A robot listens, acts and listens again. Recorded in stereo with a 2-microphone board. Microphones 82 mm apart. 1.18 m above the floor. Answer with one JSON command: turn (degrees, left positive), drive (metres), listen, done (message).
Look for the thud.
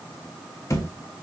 {"turn": 35}
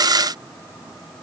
{"listen": true}
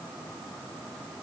{"done": "I heard a thud, but can't make it out now. It was about straight ahead or 110° left."}